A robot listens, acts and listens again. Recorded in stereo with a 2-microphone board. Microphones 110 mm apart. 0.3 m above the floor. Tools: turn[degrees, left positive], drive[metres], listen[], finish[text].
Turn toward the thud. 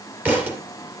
Action: turn[-30]
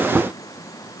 Action: listen[]
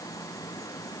Action: finish[I heard a thud, but can't make it out now. It was about 15° left or 135° right.]